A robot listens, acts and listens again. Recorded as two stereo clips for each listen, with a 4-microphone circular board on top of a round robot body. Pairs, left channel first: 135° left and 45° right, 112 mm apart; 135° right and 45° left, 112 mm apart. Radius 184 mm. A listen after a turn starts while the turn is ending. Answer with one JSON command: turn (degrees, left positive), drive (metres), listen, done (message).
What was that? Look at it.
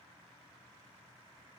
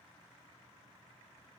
{"listen": true}
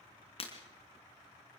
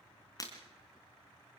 {"turn": 165}
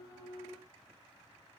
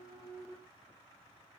{"done": "I heard breaking glass from this way, but can't make it out now."}